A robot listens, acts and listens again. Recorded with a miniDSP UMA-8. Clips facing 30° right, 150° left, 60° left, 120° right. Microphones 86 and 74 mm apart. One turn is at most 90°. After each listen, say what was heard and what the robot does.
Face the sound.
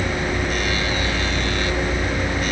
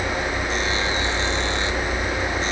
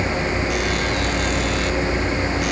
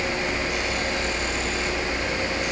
Keep listening.
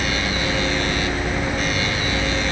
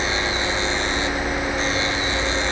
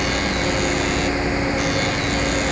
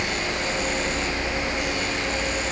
Keep listening.
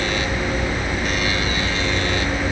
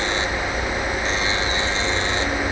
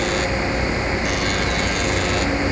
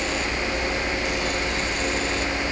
I can't make out anything.